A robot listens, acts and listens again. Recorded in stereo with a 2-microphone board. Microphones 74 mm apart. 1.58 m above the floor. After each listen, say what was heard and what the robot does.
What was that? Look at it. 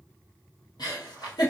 Turn 90° left.
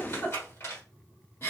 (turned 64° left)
So it is at 35° left. Turn 35° left.
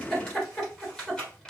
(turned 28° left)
The giggle is now 10° left. Turn 10° left.
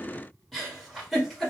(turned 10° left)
Found it: a giggle, straight ahead, 1 to 2 m away.